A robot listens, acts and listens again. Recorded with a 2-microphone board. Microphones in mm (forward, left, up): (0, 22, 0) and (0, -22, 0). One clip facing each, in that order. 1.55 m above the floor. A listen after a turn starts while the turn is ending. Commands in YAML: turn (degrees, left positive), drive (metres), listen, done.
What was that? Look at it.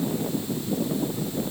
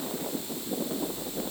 listen: true
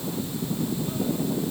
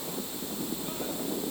listen: true
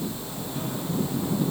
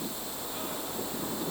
done: "I can't make out anything to turn to."